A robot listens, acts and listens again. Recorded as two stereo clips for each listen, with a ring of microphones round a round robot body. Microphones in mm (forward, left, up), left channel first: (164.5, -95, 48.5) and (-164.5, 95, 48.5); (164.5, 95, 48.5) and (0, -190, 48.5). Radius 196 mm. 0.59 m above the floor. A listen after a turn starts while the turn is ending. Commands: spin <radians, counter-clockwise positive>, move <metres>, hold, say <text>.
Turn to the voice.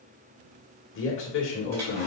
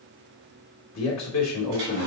spin 0.44
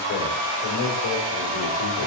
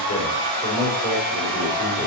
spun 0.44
say Facing the man speaking.